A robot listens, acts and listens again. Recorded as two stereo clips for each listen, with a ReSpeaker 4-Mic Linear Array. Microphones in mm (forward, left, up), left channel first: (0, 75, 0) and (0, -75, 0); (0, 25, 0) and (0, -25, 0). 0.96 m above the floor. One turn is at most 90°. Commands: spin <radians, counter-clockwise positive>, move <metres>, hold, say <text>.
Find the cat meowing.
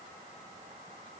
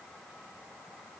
hold
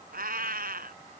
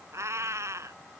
spin -1.57
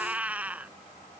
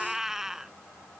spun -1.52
spin -0.17
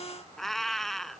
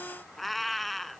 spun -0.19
say Facing the cat meowing.